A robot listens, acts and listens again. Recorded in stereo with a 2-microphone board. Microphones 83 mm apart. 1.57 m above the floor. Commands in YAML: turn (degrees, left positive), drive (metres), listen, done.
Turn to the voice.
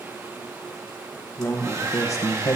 turn: 45
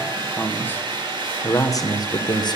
turn: 60
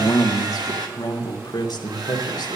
turn: 55
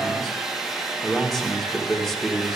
done: "Found it: a man speaking, straight ahead."